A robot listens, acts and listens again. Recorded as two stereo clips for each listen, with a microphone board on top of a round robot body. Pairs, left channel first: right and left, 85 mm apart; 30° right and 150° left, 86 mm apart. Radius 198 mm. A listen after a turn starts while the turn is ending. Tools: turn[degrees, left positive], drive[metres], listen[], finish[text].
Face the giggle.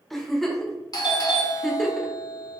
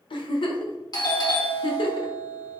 Action: finish[Facing the giggle.]